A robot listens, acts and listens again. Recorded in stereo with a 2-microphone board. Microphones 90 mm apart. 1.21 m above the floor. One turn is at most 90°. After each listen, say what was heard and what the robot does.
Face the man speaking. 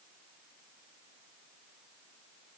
Keep listening.
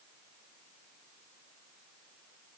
Keep listening.
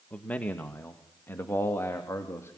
The man speaking: about 30° left or 150° left. Turn 30° left.
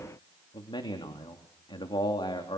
So it is at 115° left. Turn 90° left.
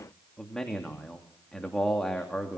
Facing the man speaking.